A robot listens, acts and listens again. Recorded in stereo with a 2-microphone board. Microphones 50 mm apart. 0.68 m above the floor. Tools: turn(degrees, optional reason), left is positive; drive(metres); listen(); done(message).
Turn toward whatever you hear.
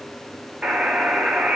turn(degrees=-20, reason="The buzzer: about 20° right or 160° right.")
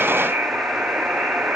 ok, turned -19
turn(degrees=-145, reason="So it is at 145° right.")
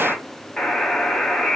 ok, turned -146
turn(degrees=10, reason="The buzzer is now 10° left.")
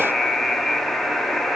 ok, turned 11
done("Facing the buzzer.")